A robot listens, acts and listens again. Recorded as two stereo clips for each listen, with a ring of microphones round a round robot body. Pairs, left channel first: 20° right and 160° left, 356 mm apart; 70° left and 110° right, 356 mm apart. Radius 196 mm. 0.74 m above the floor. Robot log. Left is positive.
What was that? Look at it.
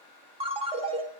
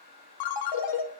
note: The ringtone: 85° left.
cmd yaw +85
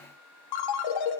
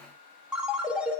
note: The ringtone is now 25° right.
cmd yaw -25
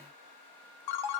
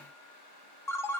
note: The ringtone is now 15° right.
cmd yaw -15
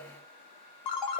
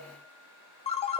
end: Found it: a ringtone, straight ahead, 1 to 2 m away.